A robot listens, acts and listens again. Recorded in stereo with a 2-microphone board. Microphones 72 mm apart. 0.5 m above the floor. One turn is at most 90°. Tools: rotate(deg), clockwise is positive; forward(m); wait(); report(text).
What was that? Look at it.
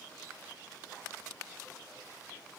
wait()
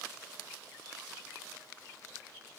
wait()
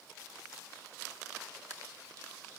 report("I can't make out anything to turn to.")